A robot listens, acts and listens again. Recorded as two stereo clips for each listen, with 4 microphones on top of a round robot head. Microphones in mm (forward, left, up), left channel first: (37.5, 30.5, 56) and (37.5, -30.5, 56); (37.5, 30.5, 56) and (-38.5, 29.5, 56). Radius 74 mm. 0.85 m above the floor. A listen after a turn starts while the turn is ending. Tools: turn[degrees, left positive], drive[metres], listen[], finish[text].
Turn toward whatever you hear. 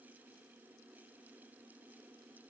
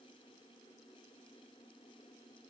Action: listen[]
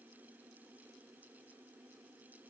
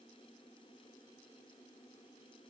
Action: listen[]
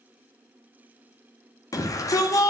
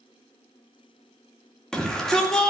Thought: The shout: 80° left.
Action: turn[80]
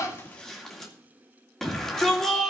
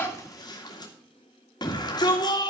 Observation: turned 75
Action: finish[Found it: a shout, straight ahead, 2 to 4 m away.]